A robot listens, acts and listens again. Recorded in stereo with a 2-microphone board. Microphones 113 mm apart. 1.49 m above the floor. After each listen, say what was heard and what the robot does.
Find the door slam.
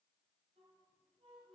Keep listening.
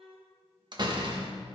The door slam: about 40° right or 140° right. Turn 40° right.
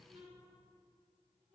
Keep listening.
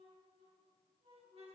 I heard a door slam, but can't make it out now. It was about straight ahead or 100° right.